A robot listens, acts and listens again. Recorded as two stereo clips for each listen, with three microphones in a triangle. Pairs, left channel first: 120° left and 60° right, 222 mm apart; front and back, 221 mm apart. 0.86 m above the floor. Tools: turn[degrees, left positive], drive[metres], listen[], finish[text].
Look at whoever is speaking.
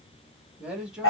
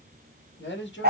Thought: The man speaking: 25° left.
Action: turn[25]
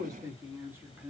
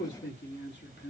Thought: The man speaking is now 20° left.
Action: turn[20]
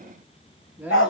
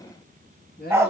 Thought: The man speaking is now 20° left.
Action: turn[20]
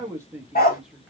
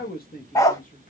Thought: The man speaking is now 25° left.
Action: turn[25]
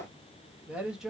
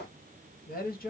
Thought: The man speaking is now 25° left.
Action: turn[25]
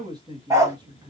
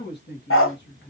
Action: finish[Found it: a man speaking, straight ahead, 1 to 2 m away.]